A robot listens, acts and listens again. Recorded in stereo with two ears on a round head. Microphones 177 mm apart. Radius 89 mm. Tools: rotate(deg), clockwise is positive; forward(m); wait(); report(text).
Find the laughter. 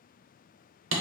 wait()
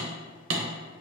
wait()
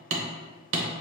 report("I can't make out laughter, only hammering.")